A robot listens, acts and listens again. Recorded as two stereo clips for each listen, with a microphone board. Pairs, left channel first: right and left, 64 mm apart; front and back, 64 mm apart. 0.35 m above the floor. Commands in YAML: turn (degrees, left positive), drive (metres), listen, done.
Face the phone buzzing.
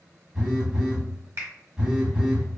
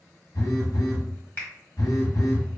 turn: 15
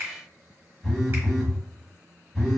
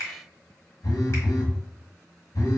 done: "Found it: a phone buzzing, straight ahead, 1 to 2 m away."